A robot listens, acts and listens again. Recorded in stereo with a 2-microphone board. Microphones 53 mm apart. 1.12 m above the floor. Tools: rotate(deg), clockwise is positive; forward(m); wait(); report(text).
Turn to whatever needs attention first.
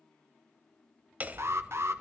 rotate(55)
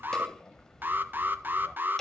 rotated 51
rotate(50)
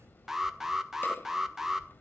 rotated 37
rotate(10)
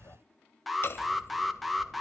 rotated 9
report("Facing the alarm, 1 to 2 m away.")